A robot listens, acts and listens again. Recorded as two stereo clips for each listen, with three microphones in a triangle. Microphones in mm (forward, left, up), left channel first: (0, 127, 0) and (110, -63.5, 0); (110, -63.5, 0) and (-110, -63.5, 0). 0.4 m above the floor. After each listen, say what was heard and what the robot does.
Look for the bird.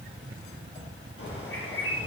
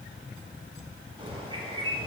The bird: 115° left. Turn 115° left.
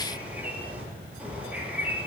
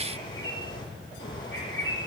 The bird is now 25° left. Turn 25° left.
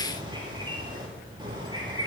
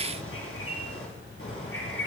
The bird is now 10° left. Turn 10° left.
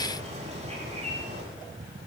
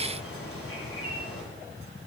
Facing the bird.